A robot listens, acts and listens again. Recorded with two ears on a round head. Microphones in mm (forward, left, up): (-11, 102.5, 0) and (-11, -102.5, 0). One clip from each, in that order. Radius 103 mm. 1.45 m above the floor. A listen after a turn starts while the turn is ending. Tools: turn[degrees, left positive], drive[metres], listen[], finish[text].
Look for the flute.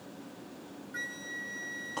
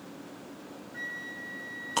Action: turn[90]
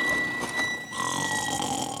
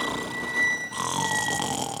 Action: finish[Facing the flute, 2 to 4 m away.]